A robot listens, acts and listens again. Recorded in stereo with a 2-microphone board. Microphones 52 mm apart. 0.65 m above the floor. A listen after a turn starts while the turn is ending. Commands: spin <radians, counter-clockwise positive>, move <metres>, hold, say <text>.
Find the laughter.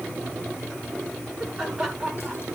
spin 0.52
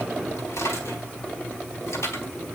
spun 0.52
hold
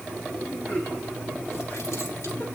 spin 2.44
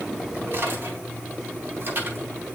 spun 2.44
hold
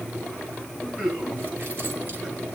say Found it: laughter, straight ahead, over 4 m away.